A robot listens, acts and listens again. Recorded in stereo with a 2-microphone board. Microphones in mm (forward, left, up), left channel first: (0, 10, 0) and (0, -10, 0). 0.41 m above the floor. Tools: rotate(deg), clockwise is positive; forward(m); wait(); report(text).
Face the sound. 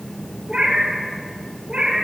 rotate(50)
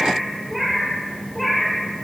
report("Facing the cat meowing.")